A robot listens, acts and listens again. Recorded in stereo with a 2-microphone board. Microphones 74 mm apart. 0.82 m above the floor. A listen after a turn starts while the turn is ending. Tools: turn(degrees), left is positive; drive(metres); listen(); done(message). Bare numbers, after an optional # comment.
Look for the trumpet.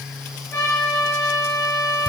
# The trumpet: about 35° left or 145° left.
turn(35)
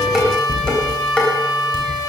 # So it is at 110° left.
turn(110)
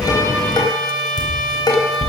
# The trumpet is now 10° left.
turn(10)
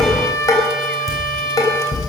done("Found it: a trumpet, straight ahead.")